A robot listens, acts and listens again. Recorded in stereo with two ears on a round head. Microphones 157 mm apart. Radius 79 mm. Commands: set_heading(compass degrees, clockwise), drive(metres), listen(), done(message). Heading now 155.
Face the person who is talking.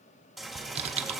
listen()
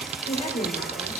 set_heading(115)
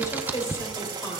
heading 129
set_heading(109)
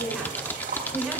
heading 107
done("Facing the woman speaking.")